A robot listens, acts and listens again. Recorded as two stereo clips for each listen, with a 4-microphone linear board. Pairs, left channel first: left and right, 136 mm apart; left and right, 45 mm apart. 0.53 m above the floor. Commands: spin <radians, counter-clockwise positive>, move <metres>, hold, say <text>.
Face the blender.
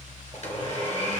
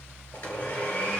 spin 0.96
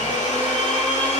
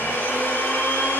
spin 1.13
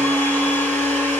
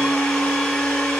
spin 0.26
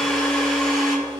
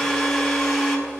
say Found it: a blender, straight ahead.